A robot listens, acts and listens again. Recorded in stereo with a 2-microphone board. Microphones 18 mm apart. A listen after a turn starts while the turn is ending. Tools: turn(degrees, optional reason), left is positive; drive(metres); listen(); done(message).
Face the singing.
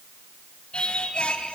turn(degrees=70, reason="The singing: about 70° left or 110° left.")
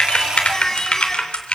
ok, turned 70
turn(degrees=30, reason="So it is at 30° left.")
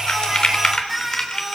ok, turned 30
done("Found it: singing, straight ahead, over 4 m away.")